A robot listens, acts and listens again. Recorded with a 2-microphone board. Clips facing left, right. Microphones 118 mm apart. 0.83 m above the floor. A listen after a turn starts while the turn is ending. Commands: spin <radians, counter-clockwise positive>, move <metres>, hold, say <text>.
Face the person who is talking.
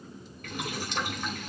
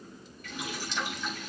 hold
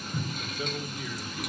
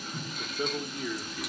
spin -0.61
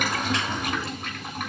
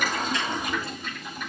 hold
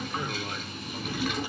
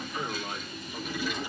say Found it: a man speaking, straight ahead.